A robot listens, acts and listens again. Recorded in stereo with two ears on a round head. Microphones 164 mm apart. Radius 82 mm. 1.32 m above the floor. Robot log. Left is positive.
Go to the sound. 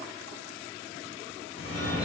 note: The phone ringing: about 75° left or 105° left.
cmd yaw +75
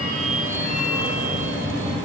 note: So it is at 15° left.
cmd yaw +15
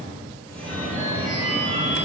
note: The phone ringing is now 10° left.
cmd yaw +10
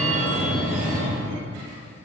cmd fwd 1.0
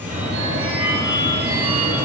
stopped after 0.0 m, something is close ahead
note: The phone ringing is now 10° right.
cmd yaw -10
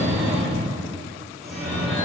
end: Blocked. The phone ringing is further on, straight ahead.